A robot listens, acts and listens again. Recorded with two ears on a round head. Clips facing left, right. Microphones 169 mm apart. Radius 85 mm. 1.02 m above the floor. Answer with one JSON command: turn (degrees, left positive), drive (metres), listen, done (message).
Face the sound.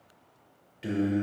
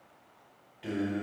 {"turn": 30}
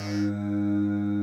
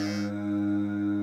{"turn": 10}
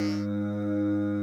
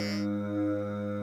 {"turn": 15}
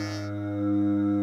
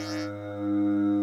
{"turn": 15}
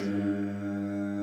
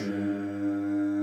{"done": "Facing the singing, 2 to 4 m away."}